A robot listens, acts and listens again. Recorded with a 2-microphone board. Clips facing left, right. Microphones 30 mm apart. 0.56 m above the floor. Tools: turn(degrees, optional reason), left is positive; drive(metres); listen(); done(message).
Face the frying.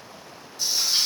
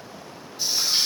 turn(degrees=-30)
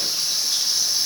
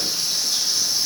turn(degrees=15, reason="So it is at 15° left.")
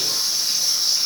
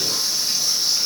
done("Found it: frying, straight ahead, 1 to 2 m away.")